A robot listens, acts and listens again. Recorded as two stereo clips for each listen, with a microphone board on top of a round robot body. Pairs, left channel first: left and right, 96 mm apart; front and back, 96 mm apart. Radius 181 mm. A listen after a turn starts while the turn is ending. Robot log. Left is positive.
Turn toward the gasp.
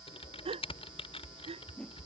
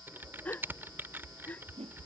note: The gasp: 75° right.
cmd yaw -75
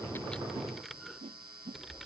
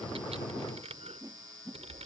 end: Facing where the gasp came from. I can't hear it now.